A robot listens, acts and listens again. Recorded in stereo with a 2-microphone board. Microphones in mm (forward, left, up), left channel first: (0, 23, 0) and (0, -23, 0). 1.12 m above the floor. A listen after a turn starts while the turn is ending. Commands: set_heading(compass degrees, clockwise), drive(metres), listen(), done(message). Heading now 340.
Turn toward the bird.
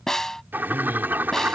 set_heading(20)
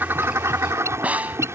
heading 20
set_heading(120)
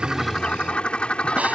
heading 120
set_heading(100)
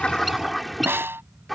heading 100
done("Found it: a bird, straight ahead.")